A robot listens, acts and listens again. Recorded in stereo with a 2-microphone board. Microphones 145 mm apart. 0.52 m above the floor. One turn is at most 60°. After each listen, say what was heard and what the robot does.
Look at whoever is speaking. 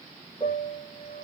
Keep listening.
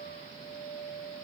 Keep listening.
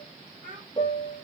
The child speaking: about 65° right or 115° right. Turn 60° right.
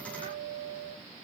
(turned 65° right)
Keep listening.
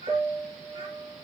Keep listening.
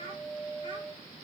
So it is at 35° right. Turn 35° right.
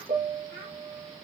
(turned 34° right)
Found it: a child speaking, straight ahead.